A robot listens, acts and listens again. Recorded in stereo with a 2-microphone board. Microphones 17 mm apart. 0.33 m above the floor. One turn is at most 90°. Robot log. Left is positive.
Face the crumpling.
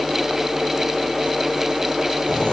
cmd idle
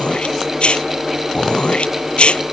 cmd idle
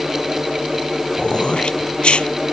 end: I can't make out crumpling to turn to.